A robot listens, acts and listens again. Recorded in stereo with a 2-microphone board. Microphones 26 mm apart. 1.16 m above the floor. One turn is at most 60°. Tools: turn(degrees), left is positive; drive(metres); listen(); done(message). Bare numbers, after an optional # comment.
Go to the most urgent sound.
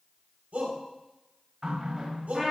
# The shout: about 75° right or 105° right.
turn(-60)
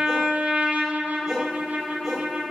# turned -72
listen()
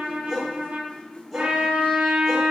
drive(1.0)
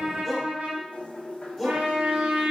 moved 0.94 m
drive(1.0)
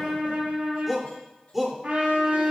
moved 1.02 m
# The shout is now 10° right.
turn(-10)
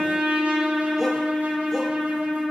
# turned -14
listen()
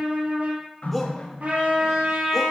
drive(1.0)
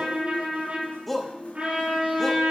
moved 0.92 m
drive(1.0)
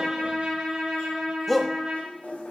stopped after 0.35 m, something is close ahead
done("Arrived at the shout, straight ahead.")